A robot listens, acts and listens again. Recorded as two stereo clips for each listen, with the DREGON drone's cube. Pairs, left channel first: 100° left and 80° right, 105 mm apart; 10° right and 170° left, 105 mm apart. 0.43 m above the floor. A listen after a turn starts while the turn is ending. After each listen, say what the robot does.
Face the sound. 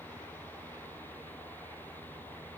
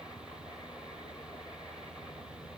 Keep listening.
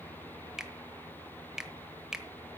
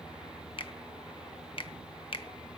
Found it: a finger snap, straight ahead, 1 to 2 m away.